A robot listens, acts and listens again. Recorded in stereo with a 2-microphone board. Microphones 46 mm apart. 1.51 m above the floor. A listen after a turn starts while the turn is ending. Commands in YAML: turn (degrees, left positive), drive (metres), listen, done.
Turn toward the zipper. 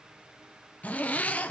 turn: 35
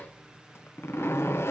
turn: 110
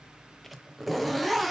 done: "Facing the zipper."